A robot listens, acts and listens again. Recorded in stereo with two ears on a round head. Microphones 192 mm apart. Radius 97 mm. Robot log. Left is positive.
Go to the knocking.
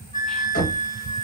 note: The knocking: about 40° left or 140° left.
cmd yaw +40
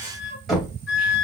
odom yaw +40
cmd fwd 1.0
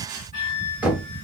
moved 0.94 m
cmd fwd 1.0
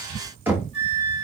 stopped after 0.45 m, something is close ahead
note: The knocking is now 10° right.
cmd yaw -10
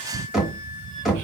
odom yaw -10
end: I am next to the knocking.